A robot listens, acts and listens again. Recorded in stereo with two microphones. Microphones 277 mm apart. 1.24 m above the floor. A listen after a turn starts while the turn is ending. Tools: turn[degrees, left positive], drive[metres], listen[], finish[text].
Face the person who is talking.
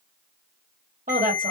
Thought: The woman speaking: about 30° right or 150° right.
Action: turn[-30]
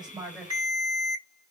Action: finish[Found it: a woman speaking, straight ahead, 1 to 2 m away.]